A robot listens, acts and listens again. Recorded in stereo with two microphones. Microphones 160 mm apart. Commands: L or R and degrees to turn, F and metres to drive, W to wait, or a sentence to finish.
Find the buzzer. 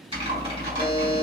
L60
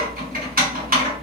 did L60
W
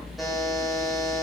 Facing the buzzer.